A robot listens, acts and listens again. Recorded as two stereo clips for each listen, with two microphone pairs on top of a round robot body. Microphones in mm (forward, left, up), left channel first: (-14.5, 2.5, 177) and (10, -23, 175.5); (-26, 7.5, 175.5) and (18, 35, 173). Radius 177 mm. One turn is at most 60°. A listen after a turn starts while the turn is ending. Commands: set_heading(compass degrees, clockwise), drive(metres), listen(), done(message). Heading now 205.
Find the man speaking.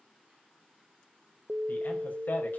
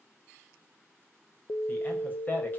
set_heading(145)
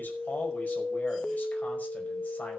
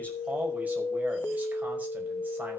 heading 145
set_heading(85)
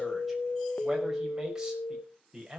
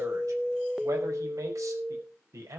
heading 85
set_heading(60)
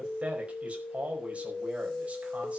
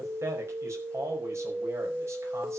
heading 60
done("Facing the man speaking, over 4 m away.")